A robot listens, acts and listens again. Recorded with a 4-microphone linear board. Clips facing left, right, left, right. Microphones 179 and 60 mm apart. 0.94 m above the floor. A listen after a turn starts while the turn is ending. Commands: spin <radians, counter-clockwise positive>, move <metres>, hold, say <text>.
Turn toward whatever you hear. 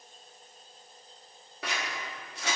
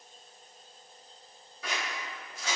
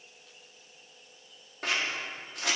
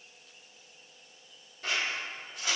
spin 1.31
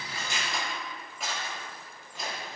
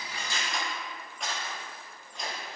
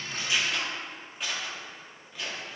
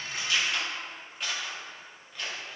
say Found it: scissors, straight ahead.